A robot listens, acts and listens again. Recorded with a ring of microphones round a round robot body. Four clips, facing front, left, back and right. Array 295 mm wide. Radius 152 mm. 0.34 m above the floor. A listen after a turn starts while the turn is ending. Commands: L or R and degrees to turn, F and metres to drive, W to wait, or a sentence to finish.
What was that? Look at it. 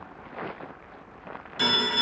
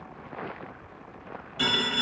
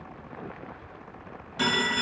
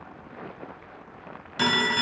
R90
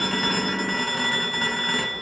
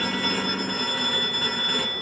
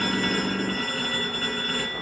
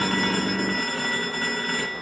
Facing the phone ringing, 1 to 2 m away.